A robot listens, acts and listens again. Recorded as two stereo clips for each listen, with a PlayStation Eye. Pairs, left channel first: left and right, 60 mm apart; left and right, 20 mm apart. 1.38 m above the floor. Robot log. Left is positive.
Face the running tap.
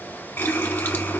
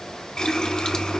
note: The running tap: about 35° left or 145° left.
cmd yaw +35
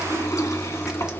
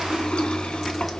note: So it is at 105° left.
cmd yaw +105
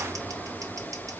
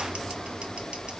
end: Facing the running tap.